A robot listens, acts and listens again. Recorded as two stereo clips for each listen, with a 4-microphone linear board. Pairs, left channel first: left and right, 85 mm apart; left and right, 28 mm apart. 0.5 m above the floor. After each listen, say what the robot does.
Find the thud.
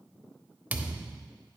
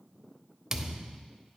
Turn 20° right.
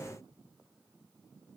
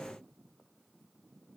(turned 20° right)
Keep listening.
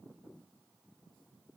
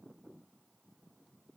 I heard a thud, but can't make it out now. It was about straight ahead or 140° right.